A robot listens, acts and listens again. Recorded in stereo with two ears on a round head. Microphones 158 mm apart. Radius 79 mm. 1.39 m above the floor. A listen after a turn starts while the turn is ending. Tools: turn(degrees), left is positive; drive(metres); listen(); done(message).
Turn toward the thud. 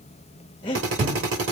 turn(degrees=-35)
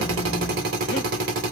listen()
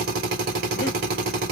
done("I heard a thud, but can't make it out now. It was about straight ahead or 110° right.")